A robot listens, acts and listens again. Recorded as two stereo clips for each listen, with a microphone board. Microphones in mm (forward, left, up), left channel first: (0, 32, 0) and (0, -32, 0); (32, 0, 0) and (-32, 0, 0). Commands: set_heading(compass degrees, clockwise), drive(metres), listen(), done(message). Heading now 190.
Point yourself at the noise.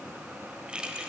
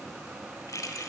set_heading(205)
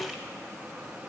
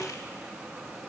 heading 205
listen()
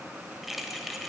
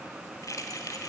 done("Found it: keys jangling, straight ahead, 1 to 2 m away.")